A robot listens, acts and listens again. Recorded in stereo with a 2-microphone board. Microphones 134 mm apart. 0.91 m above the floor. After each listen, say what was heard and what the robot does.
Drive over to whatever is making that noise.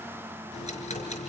The ticking: about 55° left or 125° left. Turn 55° left.
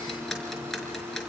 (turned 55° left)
Drive 1.0 m forward.
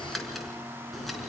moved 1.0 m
Drive 1.0 m forward.
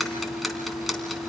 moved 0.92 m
Drive 1.0 m forward.
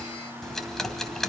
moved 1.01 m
Drive 1.0 m forward.
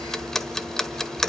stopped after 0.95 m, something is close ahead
Arrived at the ticking, straight ahead.